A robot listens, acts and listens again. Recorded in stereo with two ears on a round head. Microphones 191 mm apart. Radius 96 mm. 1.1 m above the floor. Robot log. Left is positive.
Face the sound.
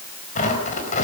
note: The tearing paper: about 35° left or 145° left.
cmd yaw +35
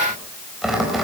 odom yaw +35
end: Found it: tearing paper, straight ahead, over 4 m away.